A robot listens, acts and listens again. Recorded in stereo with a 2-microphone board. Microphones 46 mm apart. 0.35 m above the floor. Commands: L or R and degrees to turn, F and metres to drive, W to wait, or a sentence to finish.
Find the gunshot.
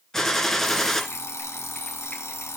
L30
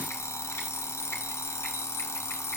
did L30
W
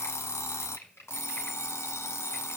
I heard a gunshot, but can't make it out now. It was about 20° right or 140° left.